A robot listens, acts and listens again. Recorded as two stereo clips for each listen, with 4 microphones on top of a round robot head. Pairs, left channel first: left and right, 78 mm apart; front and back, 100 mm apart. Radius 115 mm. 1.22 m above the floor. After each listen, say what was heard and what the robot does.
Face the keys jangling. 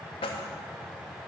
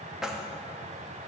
The keys jangling: 95° left. Turn 95° left.
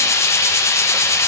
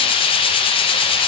Keep listening.
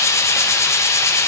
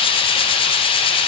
Keep listening.
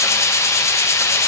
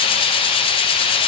I heard keys jangling from this way, but can't make it out now.